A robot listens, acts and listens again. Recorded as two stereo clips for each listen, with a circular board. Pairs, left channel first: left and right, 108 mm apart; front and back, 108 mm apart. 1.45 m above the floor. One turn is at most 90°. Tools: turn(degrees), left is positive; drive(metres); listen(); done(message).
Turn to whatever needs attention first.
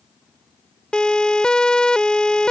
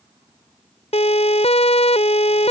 turn(degrees=10)
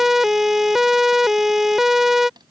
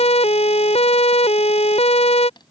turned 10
done("Facing the siren.")